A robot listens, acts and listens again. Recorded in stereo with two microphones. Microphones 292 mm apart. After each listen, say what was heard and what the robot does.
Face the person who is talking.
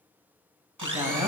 Turn 30° right.
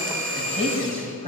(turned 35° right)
So it is at 20° left. Turn 20° left.
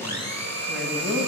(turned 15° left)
Facing the woman speaking.